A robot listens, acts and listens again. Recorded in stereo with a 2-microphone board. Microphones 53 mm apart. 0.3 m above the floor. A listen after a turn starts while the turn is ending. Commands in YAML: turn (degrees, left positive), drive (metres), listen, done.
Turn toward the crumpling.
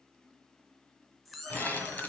turn: 35
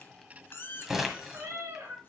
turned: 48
turn: -10
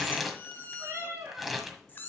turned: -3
done: "Found it: crumpling, straight ahead, 1 to 2 m away."